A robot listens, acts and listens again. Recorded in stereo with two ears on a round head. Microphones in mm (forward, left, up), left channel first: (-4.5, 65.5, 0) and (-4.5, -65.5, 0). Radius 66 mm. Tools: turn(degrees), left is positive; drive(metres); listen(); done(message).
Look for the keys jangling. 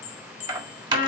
turn(degrees=-30)
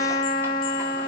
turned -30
listen()
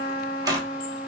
turn(degrees=-25)
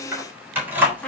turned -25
turn(degrees=-30)
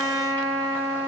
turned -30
listen()
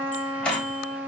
turn(degrees=10)
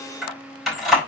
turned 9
done("Found it: keys jangling, straight ahead.")